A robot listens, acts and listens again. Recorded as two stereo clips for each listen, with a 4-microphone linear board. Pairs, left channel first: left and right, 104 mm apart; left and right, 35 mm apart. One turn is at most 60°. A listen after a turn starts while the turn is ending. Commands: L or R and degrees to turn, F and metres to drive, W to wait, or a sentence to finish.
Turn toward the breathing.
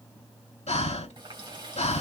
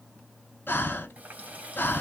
L60
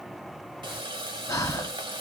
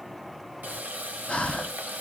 L35
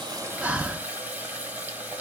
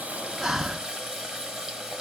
R10
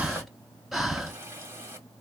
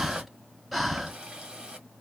Facing the breathing, under 1 m away.